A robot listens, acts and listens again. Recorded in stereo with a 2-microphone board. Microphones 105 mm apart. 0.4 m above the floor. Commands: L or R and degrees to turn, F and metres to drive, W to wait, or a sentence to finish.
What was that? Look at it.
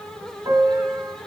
R40
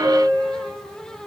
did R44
Facing the piano, 2 to 4 m away.